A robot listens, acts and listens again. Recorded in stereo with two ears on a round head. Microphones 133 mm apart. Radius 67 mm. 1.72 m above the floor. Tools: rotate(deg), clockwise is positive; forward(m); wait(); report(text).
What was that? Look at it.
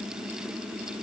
wait()
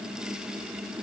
wait()
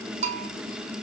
rotate(45)
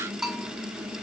report("Found it: a bell, straight ahead.")